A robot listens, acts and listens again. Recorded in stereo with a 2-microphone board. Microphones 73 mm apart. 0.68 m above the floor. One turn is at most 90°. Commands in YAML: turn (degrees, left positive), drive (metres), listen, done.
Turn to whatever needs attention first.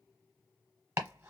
listen: true
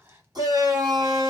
turn: -65
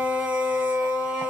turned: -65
turn: -20
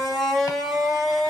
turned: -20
done: "Found it: a shout, straight ahead."